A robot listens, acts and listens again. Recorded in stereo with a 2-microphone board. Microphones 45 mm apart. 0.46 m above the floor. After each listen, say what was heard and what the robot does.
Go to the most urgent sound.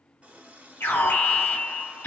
The alarm: about 70° left or 110° left. Turn 70° left.
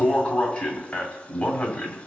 So it is at 35° left. Turn 35° left.
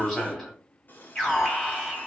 The alarm is now 15° left. Turn 15° left.
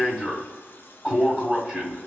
Drive 1.0 m forward.
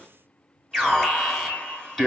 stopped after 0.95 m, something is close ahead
I am next to the alarm.